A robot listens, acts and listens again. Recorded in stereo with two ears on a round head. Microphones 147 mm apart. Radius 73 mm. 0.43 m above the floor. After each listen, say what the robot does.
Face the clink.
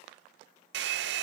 Keep listening.
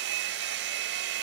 Keep listening.
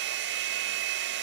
I can't make out a clink to turn to.